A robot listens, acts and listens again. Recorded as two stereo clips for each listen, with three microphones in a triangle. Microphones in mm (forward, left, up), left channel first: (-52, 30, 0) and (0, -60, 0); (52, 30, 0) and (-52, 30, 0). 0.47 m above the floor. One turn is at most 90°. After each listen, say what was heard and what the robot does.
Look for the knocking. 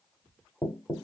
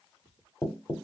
The knocking: 50° left. Turn 50° left.
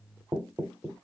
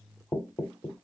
The knocking is now 10° right. Turn 10° right.
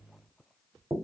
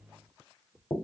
Facing the knocking.